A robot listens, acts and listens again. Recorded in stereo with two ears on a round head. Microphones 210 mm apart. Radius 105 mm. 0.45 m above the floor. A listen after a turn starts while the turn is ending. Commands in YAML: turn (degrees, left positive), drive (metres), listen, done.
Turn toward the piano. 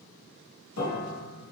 turn: 60
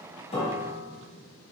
turn: 10
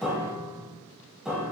done: "Found it: a piano, straight ahead."